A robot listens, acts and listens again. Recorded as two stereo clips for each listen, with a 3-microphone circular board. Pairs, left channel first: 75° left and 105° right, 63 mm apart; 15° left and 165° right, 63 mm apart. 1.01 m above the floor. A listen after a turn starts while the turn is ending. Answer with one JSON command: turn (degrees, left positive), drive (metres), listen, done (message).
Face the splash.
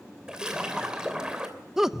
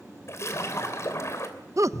{"turn": -30}
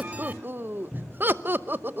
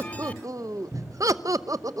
{"done": "Facing where the splash came from. I can't hear it now."}